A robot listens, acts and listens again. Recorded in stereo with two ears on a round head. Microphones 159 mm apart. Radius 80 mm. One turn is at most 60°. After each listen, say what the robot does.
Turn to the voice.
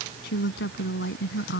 Turn 60° left.
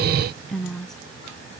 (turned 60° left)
Facing the woman speaking.